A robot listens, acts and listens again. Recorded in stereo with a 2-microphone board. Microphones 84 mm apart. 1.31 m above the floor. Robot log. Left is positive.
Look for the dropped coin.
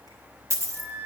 note: The dropped coin: about 35° right or 145° right.
cmd yaw -35
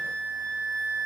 cmd idle
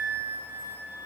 end: I heard a dropped coin, but can't make it out now. It was about straight ahead or 110° right.